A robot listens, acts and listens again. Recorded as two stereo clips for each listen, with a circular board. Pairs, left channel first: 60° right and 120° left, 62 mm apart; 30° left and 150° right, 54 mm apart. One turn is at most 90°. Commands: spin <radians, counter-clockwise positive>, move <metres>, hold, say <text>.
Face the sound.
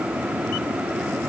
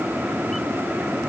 hold
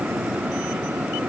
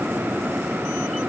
hold
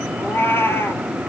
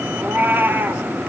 spin -1.57
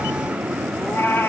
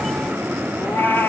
spin -0.26
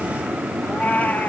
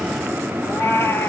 say Found it: a cat meowing, straight ahead.